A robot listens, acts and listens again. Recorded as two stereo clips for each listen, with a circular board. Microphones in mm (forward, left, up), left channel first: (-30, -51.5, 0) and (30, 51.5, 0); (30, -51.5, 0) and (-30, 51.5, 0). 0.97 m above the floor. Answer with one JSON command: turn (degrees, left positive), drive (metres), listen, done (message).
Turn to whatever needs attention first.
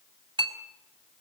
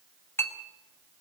{"listen": true}
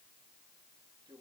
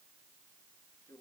{"listen": true}
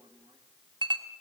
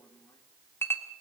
{"done": "I can't make out anything urgent to turn to."}